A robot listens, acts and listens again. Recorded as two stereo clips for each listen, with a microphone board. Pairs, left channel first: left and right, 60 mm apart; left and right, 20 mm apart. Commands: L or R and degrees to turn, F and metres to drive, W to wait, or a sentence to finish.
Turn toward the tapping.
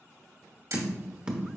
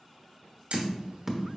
R15
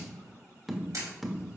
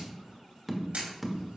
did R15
Found it: tapping, straight ahead.